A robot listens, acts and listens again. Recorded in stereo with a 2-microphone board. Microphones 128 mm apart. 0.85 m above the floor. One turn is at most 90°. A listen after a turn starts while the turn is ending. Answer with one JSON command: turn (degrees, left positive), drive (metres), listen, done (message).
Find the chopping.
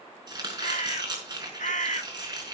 {"turn": -35}
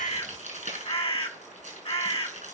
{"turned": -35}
{"turn": -90}
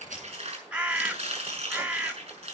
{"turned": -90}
{"turn": -50}
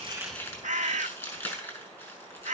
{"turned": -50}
{"turn": 20}
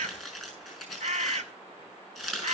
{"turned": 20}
{"done": "Facing the chopping, over 4 m away."}